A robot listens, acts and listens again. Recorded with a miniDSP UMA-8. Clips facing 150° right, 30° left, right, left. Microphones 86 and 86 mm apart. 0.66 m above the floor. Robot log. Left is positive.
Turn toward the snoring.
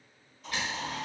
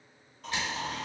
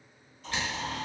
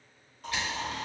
note: The snoring: 60° left.
cmd yaw +60
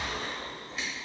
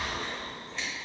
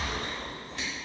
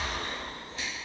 note: The snoring is now 25° left.
cmd yaw +25
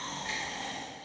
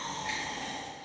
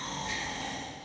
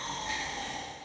end: Facing the snoring.